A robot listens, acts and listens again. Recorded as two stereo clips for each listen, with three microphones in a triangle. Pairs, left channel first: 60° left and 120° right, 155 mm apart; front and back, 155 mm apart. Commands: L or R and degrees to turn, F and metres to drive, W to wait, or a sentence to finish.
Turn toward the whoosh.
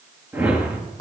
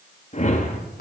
R45
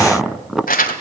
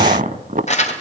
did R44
W
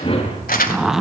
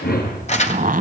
Found it: a whoosh, straight ahead.